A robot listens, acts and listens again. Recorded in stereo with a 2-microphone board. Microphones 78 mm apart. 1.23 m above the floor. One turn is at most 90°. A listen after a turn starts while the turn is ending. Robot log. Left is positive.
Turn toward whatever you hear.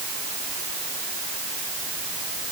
cmd idle
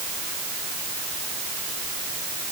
cmd idle
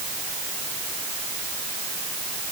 end: I can't make out anything to turn to.